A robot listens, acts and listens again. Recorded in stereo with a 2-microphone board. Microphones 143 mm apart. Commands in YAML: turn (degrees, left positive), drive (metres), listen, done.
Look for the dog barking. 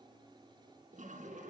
listen: true
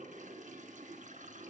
listen: true
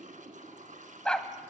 turn: 30
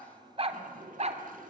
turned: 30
turn: -55
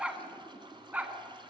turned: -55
turn: -10
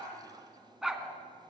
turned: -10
done: "Facing the dog barking."